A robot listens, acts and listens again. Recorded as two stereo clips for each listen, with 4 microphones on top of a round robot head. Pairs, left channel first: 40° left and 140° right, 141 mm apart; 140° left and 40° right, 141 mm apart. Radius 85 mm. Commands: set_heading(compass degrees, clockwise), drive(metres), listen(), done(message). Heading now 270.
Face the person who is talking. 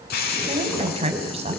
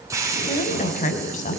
set_heading(95)
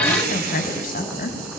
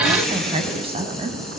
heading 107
set_heading(97)
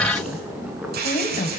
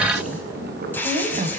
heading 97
done("Facing the woman speaking.")